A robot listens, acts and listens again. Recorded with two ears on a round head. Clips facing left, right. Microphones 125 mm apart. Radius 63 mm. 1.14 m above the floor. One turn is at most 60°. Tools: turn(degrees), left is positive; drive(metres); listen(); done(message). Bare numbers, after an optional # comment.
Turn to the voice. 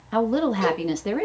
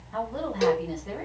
turn(60)
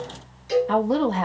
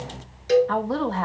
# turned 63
# So it is at 20° left.
turn(20)
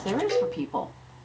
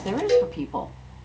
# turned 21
done("Facing the woman speaking, 1 to 2 m away.")